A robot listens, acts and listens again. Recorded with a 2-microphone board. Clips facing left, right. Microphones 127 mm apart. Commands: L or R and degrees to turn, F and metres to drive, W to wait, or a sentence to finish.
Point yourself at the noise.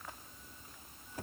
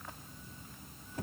W
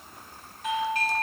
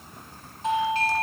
R30
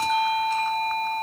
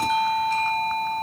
Found it: a doorbell, straight ahead.